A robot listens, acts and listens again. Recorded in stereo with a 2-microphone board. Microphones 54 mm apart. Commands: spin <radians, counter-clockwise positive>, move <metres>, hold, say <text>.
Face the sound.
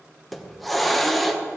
spin 0.52
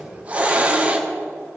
spin -0.44
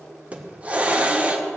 spin -0.44
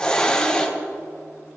spin 0.26
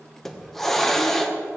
say Found it: a hiss, straight ahead, 1 to 2 m away.